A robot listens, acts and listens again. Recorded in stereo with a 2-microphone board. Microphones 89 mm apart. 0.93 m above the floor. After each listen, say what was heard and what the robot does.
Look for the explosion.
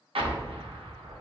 Turn 90° right.
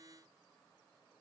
I heard an explosion from this way, but can't make it out now.